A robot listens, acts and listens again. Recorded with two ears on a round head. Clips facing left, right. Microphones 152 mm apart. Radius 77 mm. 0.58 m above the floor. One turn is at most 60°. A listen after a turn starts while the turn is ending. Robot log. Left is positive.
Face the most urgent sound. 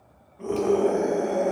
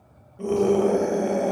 note: The scream: about 35° right or 145° right.
cmd yaw -35
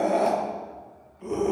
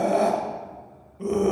note: So it is at 110° right.
cmd yaw -60
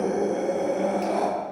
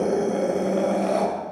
note: The scream is now 75° right.
cmd yaw -60
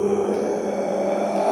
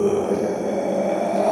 note: The scream is now 10° right.
cmd yaw -10
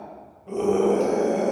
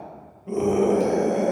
end: Facing the scream.